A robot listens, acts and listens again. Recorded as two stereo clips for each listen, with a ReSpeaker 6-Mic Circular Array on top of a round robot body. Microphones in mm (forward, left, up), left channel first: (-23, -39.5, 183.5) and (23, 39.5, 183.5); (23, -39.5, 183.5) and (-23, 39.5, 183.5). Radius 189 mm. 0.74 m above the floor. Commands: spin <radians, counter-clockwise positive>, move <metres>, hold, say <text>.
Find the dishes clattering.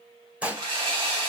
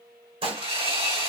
spin 2.36
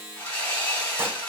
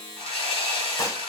hold
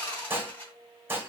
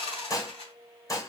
say Found it: dishes clattering, straight ahead.